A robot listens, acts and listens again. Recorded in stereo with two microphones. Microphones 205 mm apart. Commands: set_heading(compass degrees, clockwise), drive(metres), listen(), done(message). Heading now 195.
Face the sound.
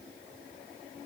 listen()
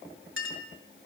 set_heading(285)
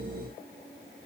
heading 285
listen()
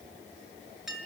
done("Found it: a clink, straight ahead.")